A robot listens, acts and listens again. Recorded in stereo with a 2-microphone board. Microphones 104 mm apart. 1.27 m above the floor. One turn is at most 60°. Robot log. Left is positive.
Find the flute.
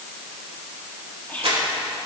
cmd idle
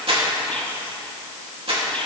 cmd idle
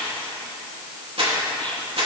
end: I can't make out a flute to turn to.